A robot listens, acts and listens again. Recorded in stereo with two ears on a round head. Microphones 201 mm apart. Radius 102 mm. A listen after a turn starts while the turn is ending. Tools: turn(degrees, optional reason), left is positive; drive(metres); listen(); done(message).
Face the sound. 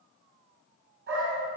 turn(degrees=-50, reason="The dog barking: about 50° right or 130° right.")
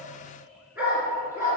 turn(degrees=-10, reason="So it is at 10° right.")
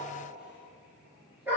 turn(degrees=-10, reason="The dog barking is now 10° right.")
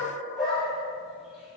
done("Found it: a dog barking, straight ahead, over 4 m away.")